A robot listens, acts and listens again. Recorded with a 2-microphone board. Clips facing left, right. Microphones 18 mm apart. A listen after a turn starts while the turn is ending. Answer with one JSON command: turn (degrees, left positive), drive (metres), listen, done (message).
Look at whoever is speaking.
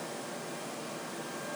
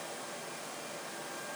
{"listen": true}
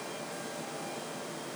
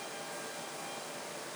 {"listen": true}
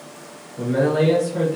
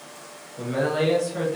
{"turn": -30}
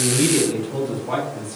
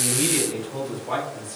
{"turn": -30}
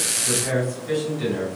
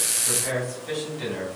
{"turn": -155}
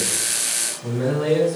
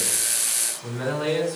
{"turn": -20}
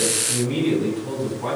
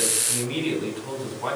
{"done": "Found it: a man speaking, straight ahead."}